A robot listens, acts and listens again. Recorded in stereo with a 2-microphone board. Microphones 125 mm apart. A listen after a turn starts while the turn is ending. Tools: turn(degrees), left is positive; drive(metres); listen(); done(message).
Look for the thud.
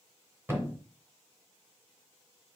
turn(degrees=-20)
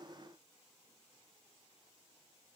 listen()
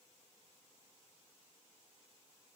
done("I heard a thud, but can't make it out now. It was about straight ahead or 140° right.")